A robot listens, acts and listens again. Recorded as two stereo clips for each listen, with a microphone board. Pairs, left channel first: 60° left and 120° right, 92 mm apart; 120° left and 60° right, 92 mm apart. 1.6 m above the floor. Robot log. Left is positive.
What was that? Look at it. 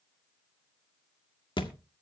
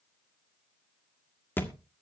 note: The thud: 55° left.
cmd yaw +55
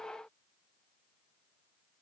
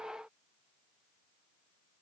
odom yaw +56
end: Facing where the thud came from. I can't hear it now.